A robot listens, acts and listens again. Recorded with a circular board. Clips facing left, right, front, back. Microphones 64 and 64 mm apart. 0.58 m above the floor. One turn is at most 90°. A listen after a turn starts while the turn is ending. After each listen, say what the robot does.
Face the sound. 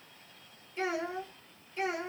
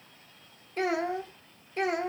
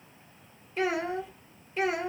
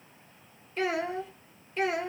Turn 85° right.
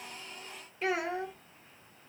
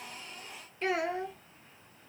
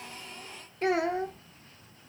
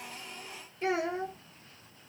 Facing the child speaking.